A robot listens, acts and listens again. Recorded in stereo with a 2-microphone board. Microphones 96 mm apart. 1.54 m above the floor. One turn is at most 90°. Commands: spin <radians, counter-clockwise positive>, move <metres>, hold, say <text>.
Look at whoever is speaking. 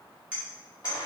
hold
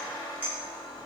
hold
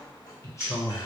spin 0.61
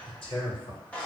spin 1.57
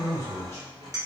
spin 0.52
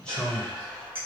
spin 0.17
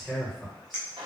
say Facing the man speaking, 1 to 2 m away.